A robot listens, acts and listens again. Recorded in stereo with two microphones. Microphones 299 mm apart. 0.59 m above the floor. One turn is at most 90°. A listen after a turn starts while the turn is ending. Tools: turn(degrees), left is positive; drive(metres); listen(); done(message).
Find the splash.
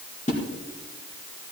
turn(degrees=25)
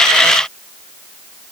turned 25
listen()
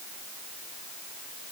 done("I heard a splash, but can't make it out now. It was about straight ahead or 130° left.")